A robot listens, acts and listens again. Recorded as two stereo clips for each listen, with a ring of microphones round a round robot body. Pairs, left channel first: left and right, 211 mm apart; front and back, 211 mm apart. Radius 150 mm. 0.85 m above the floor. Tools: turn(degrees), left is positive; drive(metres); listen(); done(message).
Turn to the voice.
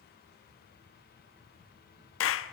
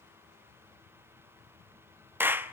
listen()
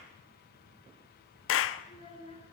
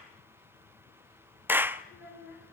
turn(degrees=30)
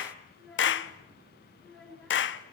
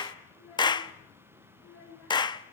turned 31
done("Facing the child speaking, over 4 m away.")